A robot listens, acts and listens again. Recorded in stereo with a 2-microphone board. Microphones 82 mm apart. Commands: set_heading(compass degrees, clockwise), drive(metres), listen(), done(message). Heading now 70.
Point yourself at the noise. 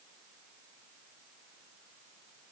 listen()
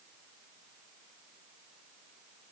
listen()
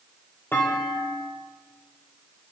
set_heading(45)
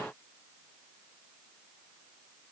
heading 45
listen()
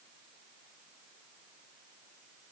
done("I heard a clunk, but can't make it out now. It was about straight ahead or 130° left.")